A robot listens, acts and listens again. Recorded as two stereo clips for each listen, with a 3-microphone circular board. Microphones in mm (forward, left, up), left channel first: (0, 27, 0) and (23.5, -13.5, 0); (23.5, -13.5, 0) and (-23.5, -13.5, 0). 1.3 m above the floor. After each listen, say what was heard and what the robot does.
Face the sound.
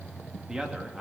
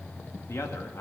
The man speaking: 15° left. Turn 15° left.
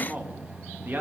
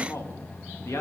The man speaking is now 15° right. Turn 15° right.
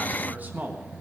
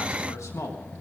The man speaking is now 10° right. Turn 10° right.
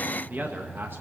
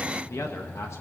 The man speaking is now 15° right. Turn 15° right.
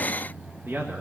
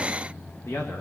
The man speaking is now 25° right. Turn 25° right.
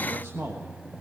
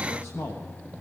The man speaking is now 30° right. Turn 30° right.
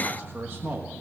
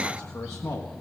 The man speaking is now 15° right. Turn 15° right.
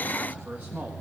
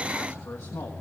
Facing the man speaking.